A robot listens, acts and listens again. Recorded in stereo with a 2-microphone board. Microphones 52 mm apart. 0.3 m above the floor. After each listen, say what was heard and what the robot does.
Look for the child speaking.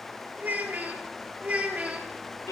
The child speaking: about 25° right or 155° right. Turn 25° right.
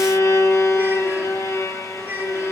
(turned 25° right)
The child speaking: about 35° right or 145° right. Turn 35° right.
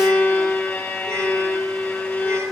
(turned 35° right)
Keep listening.
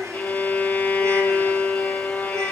Keep listening.
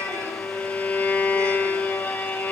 I heard a child speaking, but can't make it out now. It was about straight ahead or 110° right.